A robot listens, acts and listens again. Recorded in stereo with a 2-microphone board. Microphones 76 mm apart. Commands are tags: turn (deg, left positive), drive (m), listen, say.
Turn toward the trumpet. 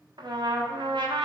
<turn deg="-70"/>
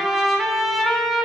<say>Facing the trumpet.</say>